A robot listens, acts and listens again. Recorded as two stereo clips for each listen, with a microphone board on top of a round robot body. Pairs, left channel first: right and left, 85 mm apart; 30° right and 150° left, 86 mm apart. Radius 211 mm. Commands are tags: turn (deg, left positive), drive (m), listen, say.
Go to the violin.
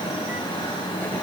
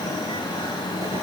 <listen/>
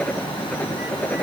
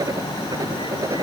<listen/>
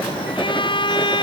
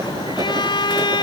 <turn deg="-65"/>
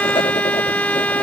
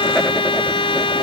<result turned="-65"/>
<turn deg="-15"/>
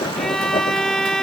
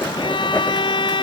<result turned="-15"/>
<drive m="1.0"/>
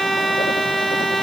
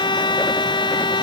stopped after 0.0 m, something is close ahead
<say>Blocked. The violin is further on, straight ahead.</say>